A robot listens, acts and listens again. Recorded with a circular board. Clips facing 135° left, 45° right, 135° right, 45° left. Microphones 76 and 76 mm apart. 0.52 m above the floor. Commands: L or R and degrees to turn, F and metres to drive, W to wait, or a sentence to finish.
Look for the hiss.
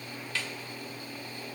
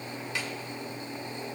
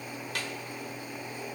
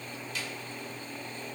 W
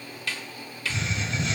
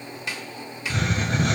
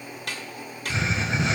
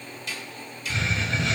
R70
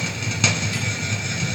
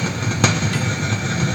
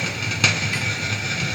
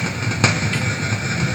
R15
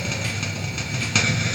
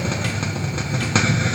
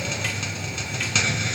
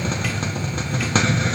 Facing the hiss, under 1 m away.